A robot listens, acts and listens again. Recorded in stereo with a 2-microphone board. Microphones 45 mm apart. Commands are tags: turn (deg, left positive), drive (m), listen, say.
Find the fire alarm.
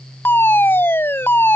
<turn deg="55"/>
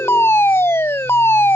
<turn deg="65"/>
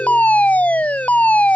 <turn deg="35"/>
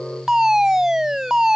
<turn deg="-15"/>
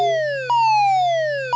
<say>Facing the fire alarm.</say>